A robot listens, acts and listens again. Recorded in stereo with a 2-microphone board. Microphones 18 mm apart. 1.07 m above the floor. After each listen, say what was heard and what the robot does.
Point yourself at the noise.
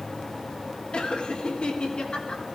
Turn 90° left.
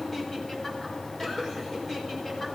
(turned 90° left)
Keep listening.
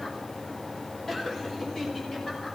Keep listening.
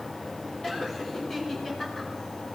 The laughter is now 20° left. Turn 20° left.
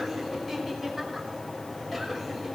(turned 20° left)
Keep listening.
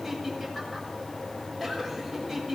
Facing the laughter.